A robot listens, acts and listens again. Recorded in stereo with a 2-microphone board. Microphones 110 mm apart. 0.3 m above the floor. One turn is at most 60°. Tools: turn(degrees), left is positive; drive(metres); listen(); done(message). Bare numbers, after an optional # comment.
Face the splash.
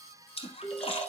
# The splash: about 55° left or 125° left.
turn(55)
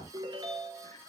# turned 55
listen()
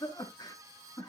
done("I heard a splash, but can't make it out now. It was about straight ahead or 70° left.")